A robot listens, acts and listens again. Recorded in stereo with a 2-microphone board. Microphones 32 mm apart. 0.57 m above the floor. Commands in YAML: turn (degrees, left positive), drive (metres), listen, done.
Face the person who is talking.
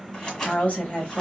turn: 60
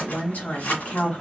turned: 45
turn: 70
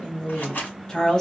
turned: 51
turn: 15
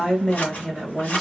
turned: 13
done: "Found it: a woman speaking, straight ahead."